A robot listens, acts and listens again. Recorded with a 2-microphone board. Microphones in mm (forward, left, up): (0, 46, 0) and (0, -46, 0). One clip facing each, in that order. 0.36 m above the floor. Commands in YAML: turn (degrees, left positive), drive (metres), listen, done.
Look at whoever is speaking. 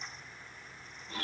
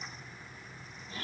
listen: true
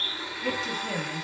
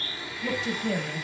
turn: 30
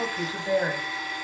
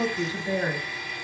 turn: 150
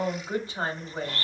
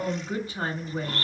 turn: 30
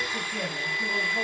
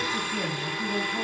done: "Found it: a woman speaking, straight ahead."